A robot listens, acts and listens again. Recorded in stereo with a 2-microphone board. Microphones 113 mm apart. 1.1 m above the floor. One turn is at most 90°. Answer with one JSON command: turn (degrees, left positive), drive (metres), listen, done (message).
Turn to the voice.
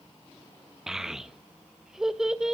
{"turn": -30}
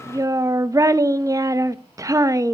{"turn": -90}
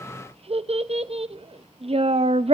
{"turn": -60}
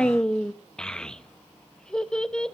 {"done": "Facing the child speaking."}